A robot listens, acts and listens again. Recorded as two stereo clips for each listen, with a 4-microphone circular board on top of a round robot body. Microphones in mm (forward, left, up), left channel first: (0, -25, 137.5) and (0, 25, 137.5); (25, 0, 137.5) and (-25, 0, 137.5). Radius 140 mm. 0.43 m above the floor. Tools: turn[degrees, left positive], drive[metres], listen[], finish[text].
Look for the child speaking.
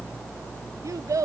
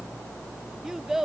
Thought: The child speaking: 100° left.
Action: turn[100]
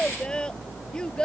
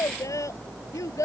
Thought: The child speaking is now 15° right.
Action: turn[-15]
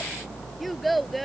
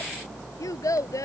Action: finish[Found it: a child speaking, straight ahead.]